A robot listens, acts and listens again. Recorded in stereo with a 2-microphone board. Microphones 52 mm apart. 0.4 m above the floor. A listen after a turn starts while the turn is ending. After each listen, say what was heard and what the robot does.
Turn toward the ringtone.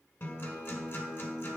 Keep listening.
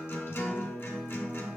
Keep listening.
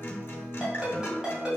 Turn 30° right.
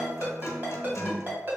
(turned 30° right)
So it is at 135° right. Turn 135° right.
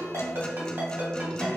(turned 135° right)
The ringtone is now 50° right. Turn 50° right.
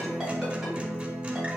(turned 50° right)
Keep listening.
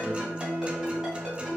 Keep listening.
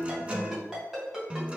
The ringtone is now 10° right. Turn 10° right.
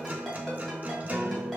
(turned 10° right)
Keep listening.
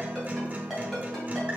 Facing the ringtone, 1 to 2 m away.